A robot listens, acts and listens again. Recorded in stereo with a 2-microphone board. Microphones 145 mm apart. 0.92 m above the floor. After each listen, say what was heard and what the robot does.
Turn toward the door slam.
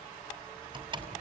The door slam: about 35° right or 145° right. Turn 35° right.
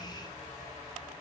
Keep listening.
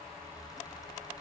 I heard a door slam, but can't make it out now. It was about straight ahead or 110° right.